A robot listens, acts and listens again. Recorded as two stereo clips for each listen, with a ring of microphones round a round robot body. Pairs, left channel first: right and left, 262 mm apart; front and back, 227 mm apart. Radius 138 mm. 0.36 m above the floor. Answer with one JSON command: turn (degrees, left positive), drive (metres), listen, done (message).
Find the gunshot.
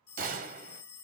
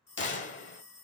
{"turn": 35}
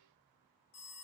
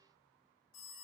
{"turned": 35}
{"done": "I heard a gunshot from this way, but can't make it out now."}